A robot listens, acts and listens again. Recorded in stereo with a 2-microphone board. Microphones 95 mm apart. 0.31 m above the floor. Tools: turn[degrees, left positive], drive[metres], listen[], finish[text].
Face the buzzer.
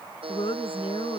Thought: The buzzer: about 70° right or 110° right.
Action: turn[-70]
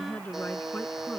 Action: finish[Found it: a buzzer, straight ahead.]